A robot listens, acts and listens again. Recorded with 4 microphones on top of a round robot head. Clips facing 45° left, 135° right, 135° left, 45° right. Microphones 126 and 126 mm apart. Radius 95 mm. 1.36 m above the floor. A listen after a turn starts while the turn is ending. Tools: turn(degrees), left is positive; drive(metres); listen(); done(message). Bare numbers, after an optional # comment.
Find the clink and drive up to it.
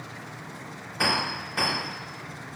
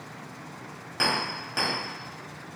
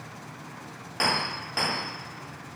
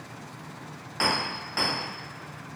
# The clink: 145° right.
turn(-145)
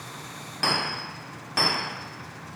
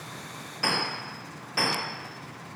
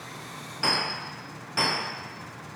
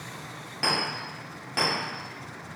drive(1.0)
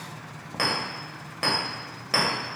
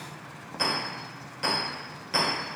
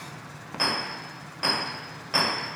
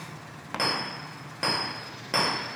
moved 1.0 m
drive(1.0)
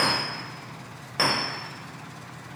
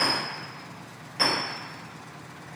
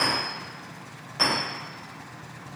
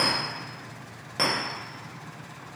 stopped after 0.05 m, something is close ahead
done("I am next to the clink.")